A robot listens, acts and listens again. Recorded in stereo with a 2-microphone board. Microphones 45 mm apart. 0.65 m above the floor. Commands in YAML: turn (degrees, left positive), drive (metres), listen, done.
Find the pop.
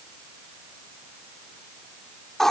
listen: true
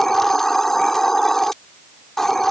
listen: true
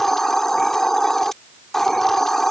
done: "I can't make out a pop to turn to."